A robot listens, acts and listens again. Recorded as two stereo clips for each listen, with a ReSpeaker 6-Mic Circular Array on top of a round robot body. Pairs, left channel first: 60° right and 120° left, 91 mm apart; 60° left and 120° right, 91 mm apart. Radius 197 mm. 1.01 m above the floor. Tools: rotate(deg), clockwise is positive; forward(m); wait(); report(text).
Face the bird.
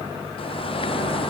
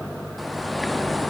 rotate(30)
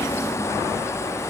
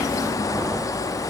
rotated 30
report("Found it: a bird, straight ahead.")